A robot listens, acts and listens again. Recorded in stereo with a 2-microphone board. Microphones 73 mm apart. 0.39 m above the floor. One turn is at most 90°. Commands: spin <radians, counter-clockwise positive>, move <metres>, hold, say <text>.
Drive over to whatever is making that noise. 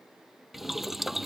spin -0.52
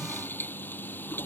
spin 0.44
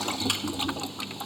move 1.0
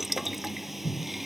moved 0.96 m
move 1.0
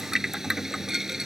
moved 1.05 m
move 1.0
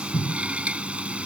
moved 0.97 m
spin -0.26
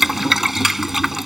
move 1.0
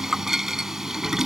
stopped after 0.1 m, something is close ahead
say Arrived at the boiling, straight ahead.